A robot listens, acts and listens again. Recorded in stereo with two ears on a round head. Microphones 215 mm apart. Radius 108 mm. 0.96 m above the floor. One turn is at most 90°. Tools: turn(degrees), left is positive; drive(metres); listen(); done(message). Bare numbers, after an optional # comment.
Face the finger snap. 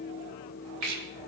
# The finger snap: about 60° right or 120° right.
turn(-60)
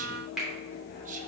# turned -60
done("Found it: a finger snap, straight ahead, 2 to 4 m away.")